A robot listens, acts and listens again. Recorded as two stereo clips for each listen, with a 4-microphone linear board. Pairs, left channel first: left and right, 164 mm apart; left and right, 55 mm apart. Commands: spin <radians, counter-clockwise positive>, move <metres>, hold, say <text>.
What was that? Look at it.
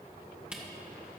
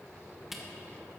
spin -0.52
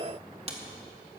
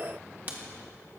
spin -2.44
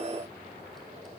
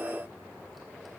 hold
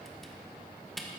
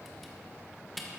say Facing the camera shutter, 1 to 2 m away.